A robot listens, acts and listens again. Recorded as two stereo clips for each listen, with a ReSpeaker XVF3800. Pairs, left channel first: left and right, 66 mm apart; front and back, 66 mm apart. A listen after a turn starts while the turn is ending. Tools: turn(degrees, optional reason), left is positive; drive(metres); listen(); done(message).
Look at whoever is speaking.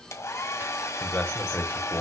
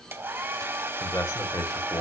turn(degrees=15, reason="The man speaking: 15° left.")
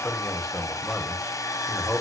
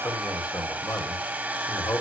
done("Facing the man speaking.")